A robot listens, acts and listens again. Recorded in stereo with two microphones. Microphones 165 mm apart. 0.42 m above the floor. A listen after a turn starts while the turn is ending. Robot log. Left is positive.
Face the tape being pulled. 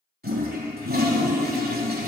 cmd idle
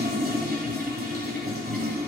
cmd idle
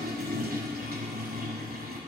end: I can't make out tape being pulled, only a toilet flushing.